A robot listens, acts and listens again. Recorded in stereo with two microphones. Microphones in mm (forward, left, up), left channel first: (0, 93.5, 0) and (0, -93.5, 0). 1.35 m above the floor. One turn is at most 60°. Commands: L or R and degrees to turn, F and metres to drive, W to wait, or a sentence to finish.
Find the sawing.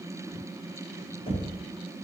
W
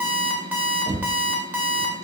W
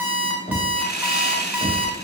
L60
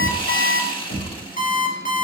L30
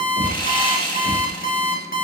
L30
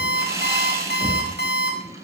R20
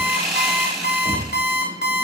Facing the sawing.